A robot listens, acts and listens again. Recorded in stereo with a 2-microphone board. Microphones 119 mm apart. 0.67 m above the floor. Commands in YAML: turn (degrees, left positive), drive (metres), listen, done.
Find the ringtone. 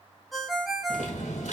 turn: 30
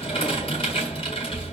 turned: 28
listen: true
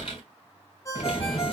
turn: 150
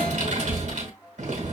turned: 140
turn: 10
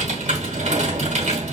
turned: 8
listen: true
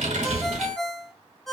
done: "Found it: a ringtone, straight ahead, 1 to 2 m away."